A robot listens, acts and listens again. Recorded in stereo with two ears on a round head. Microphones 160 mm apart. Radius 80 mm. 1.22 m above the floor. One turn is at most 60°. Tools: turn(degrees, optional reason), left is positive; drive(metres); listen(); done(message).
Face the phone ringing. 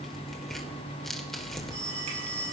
turn(degrees=-60, reason="The phone ringing: about 65° right or 115° right.")
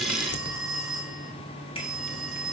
done("Found it: a phone ringing, straight ahead, over 4 m away.")